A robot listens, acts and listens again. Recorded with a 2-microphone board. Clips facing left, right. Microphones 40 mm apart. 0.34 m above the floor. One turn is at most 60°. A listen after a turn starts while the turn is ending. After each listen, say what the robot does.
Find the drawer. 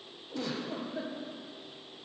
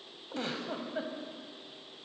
Keep listening.
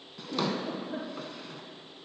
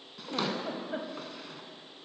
Turn 30° left.
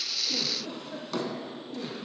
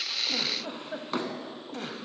Turn 30° right.
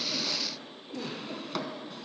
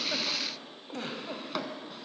Found it: a drawer, straight ahead.